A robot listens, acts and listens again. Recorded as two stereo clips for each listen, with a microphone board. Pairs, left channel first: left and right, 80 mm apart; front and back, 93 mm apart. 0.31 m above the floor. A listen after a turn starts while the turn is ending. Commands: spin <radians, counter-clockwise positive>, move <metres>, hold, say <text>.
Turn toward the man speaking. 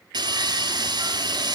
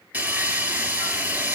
hold
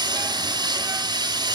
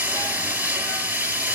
hold
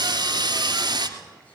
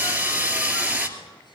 say I can't make out a man speaking, only sawing.